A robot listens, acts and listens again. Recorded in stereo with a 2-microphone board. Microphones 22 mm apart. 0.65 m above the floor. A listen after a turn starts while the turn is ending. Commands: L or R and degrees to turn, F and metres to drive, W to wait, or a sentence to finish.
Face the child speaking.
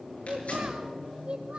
R50
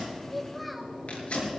W
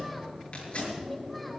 W
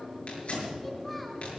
I heard a child speaking, but can't make it out now. It was about straight ahead or 80° right.